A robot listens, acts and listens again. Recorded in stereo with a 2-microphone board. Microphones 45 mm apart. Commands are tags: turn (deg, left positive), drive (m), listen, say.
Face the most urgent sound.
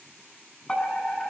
<turn deg="30"/>
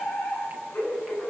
<turn deg="140"/>
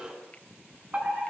<turn deg="-30"/>
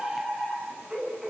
<say>Found it: a fire alarm, straight ahead.</say>